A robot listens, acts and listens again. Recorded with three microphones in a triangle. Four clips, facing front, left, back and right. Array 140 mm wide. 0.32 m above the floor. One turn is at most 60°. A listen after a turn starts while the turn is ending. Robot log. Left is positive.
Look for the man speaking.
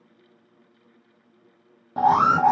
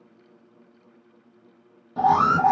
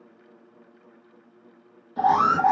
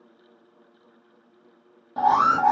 cmd idle
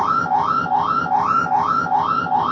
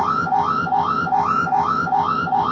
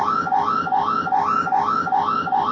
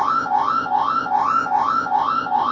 cmd idle
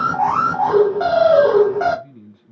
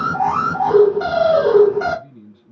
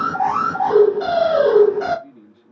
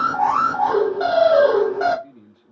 note: The man speaking: 20° left.
cmd yaw +20
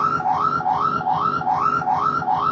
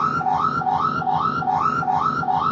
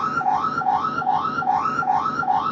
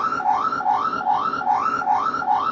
cmd idle
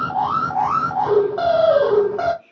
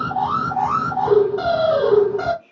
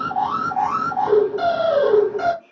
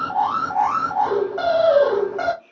end: Facing the man speaking.